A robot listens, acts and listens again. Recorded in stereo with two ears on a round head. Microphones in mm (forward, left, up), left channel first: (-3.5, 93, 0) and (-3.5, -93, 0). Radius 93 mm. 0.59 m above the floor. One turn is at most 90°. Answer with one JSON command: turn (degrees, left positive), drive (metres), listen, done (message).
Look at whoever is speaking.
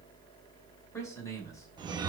{"turn": 15}
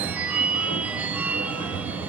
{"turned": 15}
{"listen": true}
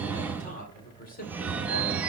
{"turn": 90}
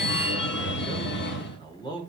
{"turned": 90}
{"turn": 20}
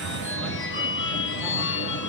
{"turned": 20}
{"listen": true}
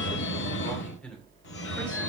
{"done": "Found it: a man speaking, straight ahead."}